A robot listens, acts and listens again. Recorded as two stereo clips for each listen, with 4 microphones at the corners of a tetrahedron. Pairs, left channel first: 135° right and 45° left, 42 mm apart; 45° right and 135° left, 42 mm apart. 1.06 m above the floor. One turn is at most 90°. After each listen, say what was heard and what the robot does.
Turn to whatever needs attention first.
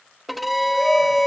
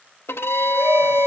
The shout: 150° left. Turn 90° left.
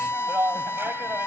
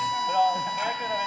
The shout is now 65° left. Turn 65° left.
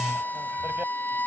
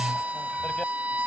Keep listening.
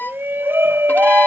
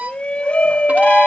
The shout is now 15° left. Turn 15° left.
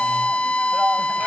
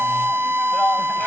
Keep listening.
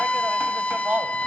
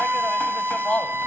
Found it: a shout, straight ahead.